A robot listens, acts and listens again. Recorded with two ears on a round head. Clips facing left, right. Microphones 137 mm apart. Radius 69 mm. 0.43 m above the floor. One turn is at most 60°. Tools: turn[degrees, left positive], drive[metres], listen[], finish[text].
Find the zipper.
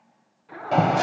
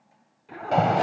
Thought: The zipper: about 25° right or 155° right.
Action: turn[-25]
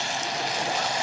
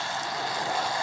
Action: listen[]
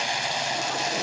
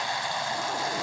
Action: listen[]
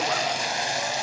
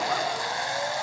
Action: finish[I heard a zipper, but can't make it out now. It was about straight ahead or 130° right.]